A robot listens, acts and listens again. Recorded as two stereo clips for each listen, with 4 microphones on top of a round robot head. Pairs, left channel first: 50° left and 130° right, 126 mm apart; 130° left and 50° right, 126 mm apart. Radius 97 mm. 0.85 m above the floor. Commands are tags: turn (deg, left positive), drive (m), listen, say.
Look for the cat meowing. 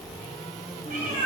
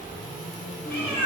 <turn deg="-155"/>
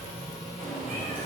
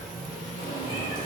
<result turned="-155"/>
<turn deg="-60"/>
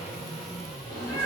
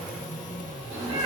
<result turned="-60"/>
<turn deg="-15"/>
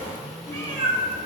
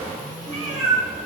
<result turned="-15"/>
<say>Found it: a cat meowing, straight ahead.</say>